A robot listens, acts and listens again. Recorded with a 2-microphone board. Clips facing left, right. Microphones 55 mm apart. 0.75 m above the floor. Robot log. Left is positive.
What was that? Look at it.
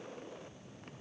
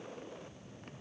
cmd idle
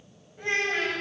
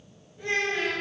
note: The child speaking: about 50° left or 130° left.
cmd yaw +50
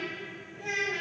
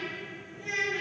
note: So it is at 85° left.
cmd yaw +85
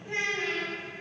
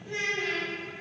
note: The child speaking is now 40° left.
cmd yaw +40
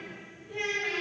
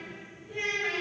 end: Facing the child speaking.